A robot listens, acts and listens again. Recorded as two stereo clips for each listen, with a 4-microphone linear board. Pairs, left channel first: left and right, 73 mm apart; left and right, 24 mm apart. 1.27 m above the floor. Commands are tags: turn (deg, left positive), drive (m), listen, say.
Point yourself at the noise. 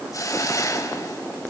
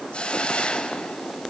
<turn deg="50"/>
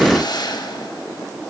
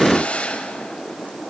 <turn deg="80"/>
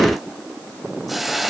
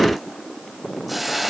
<say>Facing the hiss.</say>